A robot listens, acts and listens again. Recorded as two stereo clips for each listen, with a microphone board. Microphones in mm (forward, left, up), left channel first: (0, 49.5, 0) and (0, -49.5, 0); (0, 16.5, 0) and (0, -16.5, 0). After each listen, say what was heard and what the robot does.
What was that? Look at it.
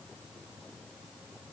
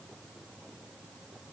Keep listening.
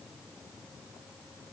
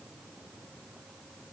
Keep listening.
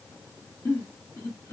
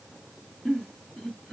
The giggle: about 20° left or 160° left. Turn 20° left.
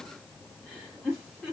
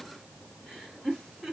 Facing the giggle.